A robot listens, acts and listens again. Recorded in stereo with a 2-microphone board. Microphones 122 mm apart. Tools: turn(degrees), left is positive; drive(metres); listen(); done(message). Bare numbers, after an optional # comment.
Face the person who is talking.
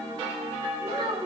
# The child speaking: about 45° right or 135° right.
turn(-45)
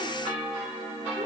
listen()
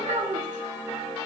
# So it is at 105° right.
turn(-105)
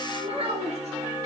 # The child speaking is now 55° right.
turn(-55)
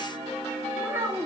# The child speaking is now 20° right.
turn(-20)
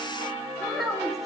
done("Facing the child speaking, 1 to 2 m away.")